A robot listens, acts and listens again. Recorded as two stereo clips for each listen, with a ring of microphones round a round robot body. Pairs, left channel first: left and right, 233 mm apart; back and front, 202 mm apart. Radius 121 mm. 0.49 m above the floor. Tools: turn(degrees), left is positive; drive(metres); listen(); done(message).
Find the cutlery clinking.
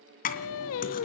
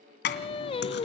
turn(degrees=145)
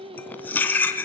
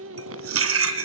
done("Found it: cutlery clinking, straight ahead.")